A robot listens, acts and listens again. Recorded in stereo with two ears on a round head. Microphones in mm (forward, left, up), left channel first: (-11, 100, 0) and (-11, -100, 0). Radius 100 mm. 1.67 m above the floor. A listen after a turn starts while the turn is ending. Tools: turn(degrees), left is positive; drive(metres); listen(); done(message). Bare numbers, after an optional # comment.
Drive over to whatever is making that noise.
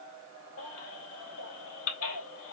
# The baby crying: about 70° left or 110° left.
turn(70)
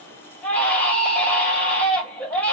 drive(1.0)
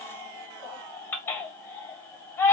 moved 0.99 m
# The baby crying is now 10° left.
turn(10)
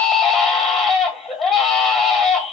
drive(1.0)
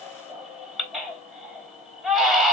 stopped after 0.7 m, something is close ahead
done("Arrived at the baby crying, straight ahead.")